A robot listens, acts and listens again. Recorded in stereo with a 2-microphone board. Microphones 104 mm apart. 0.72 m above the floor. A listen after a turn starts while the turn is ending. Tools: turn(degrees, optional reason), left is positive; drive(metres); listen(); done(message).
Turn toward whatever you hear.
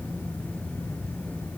listen()
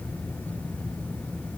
listen()
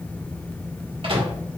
turn(degrees=-55, reason="The microwave: about 55° right or 125° right.")
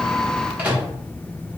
turn(degrees=-15, reason="So it is at 15° right.")
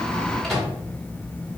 done("Facing the microwave, 1 to 2 m away.")